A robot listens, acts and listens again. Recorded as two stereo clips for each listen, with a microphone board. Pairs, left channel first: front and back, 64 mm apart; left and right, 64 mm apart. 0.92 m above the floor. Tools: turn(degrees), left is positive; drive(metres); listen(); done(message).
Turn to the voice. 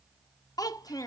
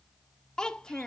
turn(degrees=10)
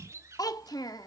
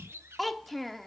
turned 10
done("Found it: a child speaking, straight ahead, 1 to 2 m away.")